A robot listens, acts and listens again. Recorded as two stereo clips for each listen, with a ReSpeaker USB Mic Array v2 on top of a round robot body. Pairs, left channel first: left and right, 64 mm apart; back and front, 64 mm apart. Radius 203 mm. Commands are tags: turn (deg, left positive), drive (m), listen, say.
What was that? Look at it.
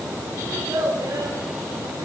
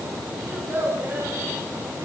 <turn deg="-60"/>
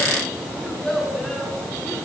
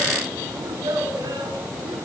<turn deg="10"/>
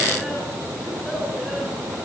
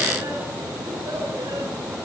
<listen/>
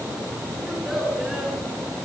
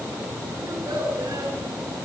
<listen/>
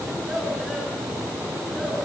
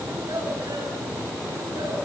<say>Facing where the child speaking came from. I can't hear it now.</say>